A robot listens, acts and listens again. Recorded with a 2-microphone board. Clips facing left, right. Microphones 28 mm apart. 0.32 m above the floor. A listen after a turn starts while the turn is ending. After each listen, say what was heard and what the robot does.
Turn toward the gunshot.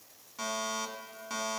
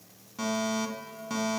Keep listening.
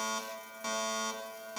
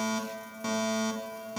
Keep listening.
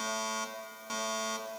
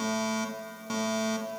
I can't make out a gunshot to turn to.